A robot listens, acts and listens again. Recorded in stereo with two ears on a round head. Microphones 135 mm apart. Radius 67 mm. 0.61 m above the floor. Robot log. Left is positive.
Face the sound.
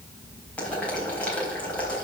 cmd yaw +30
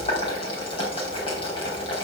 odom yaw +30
note: So it is at 140° left.
cmd yaw +140
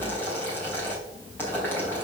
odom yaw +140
note: The boiling is now 15° left.
cmd yaw +15
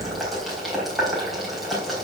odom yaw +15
end: Found it: boiling, straight ahead, 2 to 4 m away.